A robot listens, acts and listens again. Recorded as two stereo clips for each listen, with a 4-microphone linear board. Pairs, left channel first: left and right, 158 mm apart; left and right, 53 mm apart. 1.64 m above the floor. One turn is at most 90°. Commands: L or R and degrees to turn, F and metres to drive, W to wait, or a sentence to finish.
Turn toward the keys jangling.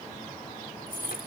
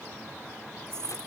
R60
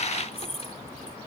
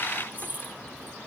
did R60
R40
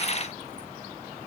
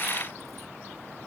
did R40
W
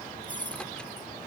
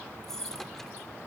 L10
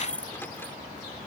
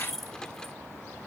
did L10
Facing the keys jangling.